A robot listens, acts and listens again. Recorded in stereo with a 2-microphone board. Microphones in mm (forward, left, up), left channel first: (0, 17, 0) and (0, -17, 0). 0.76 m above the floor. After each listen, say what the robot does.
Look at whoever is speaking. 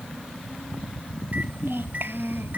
Turn 90° right.
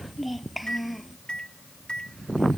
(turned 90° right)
Found it: a child speaking, straight ahead.